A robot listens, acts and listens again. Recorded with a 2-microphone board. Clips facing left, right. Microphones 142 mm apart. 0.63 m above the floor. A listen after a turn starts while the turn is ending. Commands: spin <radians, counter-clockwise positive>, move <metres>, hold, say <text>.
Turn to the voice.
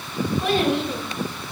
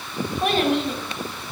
spin -1.13
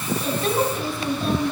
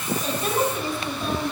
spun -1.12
say Facing the child speaking, 2 to 4 m away.